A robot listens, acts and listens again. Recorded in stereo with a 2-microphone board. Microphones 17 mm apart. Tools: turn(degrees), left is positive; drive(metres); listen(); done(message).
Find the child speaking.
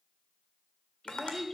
turn(degrees=-20)
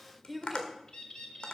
done("Found it: a child speaking, straight ahead, 2 to 4 m away.")